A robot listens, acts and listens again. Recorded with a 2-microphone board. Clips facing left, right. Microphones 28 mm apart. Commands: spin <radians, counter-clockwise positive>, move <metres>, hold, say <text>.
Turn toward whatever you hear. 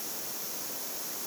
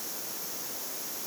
hold
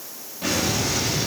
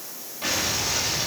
spin -0.52
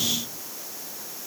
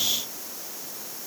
hold
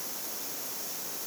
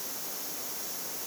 say I heard an explosion, but can't make it out now. It was about 20° left or 140° right.